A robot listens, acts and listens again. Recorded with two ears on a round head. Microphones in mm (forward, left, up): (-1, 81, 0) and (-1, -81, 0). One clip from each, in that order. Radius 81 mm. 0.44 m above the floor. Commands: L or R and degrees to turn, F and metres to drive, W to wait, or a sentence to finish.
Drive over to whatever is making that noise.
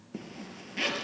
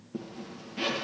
L45
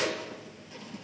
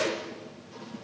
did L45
L90
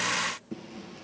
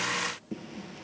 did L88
F1.0
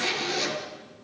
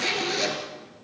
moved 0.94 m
F1.0
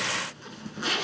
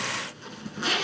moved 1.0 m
F1.0
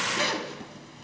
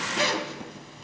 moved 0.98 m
F1.0
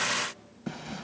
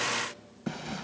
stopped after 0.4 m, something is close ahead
Arrived at the zipper, straight ahead.